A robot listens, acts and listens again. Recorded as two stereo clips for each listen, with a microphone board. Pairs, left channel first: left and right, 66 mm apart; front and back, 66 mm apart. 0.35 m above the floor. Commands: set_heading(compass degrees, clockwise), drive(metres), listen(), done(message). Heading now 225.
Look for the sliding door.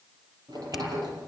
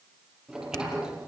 set_heading(325)
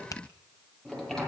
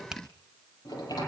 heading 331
done("Facing the sliding door.")